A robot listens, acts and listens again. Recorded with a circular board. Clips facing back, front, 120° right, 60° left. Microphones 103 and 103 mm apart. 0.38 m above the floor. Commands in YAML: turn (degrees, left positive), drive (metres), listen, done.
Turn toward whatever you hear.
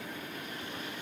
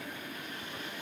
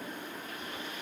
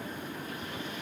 listen: true
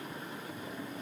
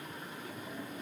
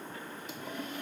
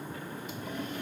listen: true
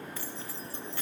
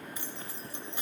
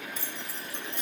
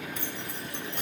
turn: 65
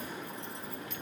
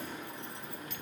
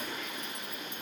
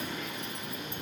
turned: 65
listen: true
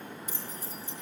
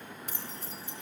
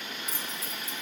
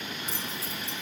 done: "Found it: keys jangling, straight ahead, 1 to 2 m away."